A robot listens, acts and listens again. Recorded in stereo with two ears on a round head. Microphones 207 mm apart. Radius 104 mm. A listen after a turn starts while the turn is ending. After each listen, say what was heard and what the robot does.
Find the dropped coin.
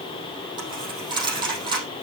The dropped coin: about 20° right or 160° right. Turn 20° right.
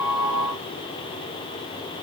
Keep listening.
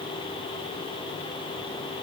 I heard a dropped coin, but can't make it out now. It was about straight ahead or 140° right.